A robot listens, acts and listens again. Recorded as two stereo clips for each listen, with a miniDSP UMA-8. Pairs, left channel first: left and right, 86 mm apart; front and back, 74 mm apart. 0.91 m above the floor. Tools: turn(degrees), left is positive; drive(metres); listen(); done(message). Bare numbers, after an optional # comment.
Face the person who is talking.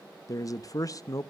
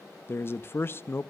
# The man speaking: 50° left.
turn(50)
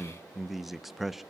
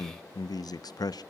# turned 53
done("Found it: a man speaking, straight ahead, under 1 m away.")